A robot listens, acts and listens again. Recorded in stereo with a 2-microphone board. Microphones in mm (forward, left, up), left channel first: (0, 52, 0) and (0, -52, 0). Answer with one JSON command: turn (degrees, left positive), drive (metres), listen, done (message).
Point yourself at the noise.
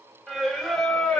{"turn": 30}
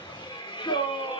{"turn": 125}
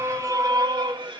{"turn": -50}
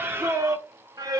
{"turn": -35}
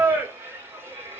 {"turn": -20}
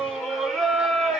{"done": "Found it: singing, straight ahead."}